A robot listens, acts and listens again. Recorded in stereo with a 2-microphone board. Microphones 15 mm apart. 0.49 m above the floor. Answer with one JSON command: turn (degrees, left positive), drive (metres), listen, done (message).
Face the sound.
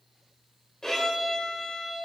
{"turn": 50}
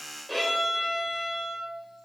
{"turn": 10}
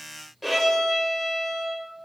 {"done": "Facing the violin, 2 to 4 m away."}